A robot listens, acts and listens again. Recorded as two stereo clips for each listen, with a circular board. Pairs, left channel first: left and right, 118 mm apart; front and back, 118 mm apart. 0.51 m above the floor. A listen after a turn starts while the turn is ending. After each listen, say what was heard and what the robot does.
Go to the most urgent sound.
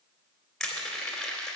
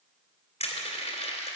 Keep listening.
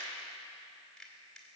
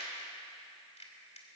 Keep listening.
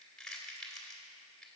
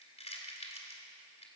I can't make out anything urgent to turn to.